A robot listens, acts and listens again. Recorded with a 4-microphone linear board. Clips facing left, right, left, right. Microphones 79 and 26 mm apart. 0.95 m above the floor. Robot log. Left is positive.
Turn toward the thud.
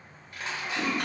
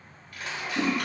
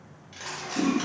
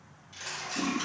cmd idle
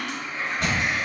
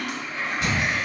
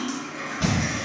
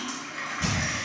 note: The thud: about 50° left or 130° left.
cmd yaw +50
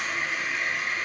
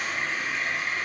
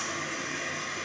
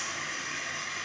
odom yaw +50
cmd idle
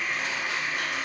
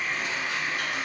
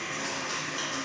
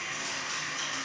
end: I heard a thud, but can't make it out now. It was about straight ahead or 80° left.